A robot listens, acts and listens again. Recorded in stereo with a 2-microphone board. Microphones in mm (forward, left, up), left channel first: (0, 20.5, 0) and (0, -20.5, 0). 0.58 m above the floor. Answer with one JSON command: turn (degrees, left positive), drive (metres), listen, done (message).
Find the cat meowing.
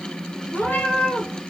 {"turn": 65}
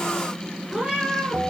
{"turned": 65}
{"turn": -10}
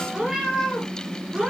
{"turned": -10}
{"turn": -10}
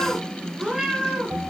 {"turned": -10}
{"turn": -15}
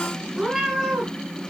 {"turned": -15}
{"done": "Found it: a cat meowing, straight ahead."}